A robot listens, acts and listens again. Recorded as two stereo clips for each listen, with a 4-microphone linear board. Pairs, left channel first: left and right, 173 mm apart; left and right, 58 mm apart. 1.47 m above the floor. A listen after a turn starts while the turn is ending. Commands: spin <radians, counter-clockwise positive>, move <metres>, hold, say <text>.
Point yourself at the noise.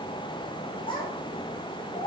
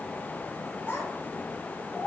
spin 0.61
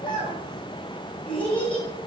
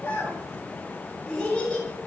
spin 0.17
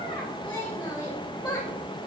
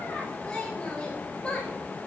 spin 0.17
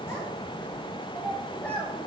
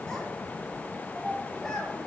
say Facing the child speaking.